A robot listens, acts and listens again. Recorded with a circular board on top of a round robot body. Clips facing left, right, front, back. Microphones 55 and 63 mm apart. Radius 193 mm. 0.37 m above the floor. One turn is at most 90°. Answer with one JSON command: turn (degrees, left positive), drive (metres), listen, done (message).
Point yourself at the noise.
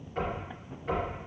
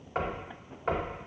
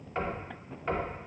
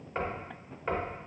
{"turn": -90}
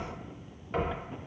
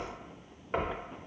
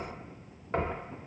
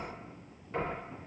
{"turn": -35}
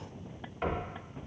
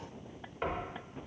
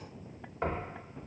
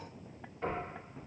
{"turn": -10}
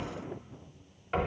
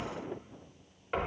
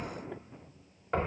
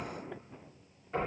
{"done": "Found it: knocking, straight ahead."}